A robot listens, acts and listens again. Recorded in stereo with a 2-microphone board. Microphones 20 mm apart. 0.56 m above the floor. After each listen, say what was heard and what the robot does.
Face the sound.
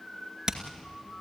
The hammering: about 30° right or 150° right. Turn 30° right.
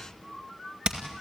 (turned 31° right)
So it is at 120° right. Turn 120° right.
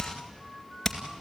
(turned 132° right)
The hammering is now 10° left. Turn 10° left.
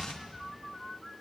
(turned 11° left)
Keep listening.
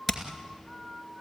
Found it: hammering, straight ahead, 2 to 4 m away.